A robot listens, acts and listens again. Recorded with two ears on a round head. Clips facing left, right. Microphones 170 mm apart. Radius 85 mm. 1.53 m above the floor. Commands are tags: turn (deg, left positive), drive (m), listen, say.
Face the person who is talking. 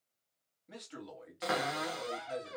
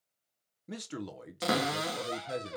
<turn deg="-60"/>
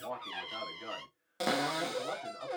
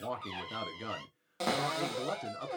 <turn deg="-55"/>
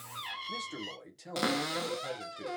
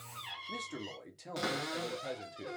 <say>Facing the man speaking.</say>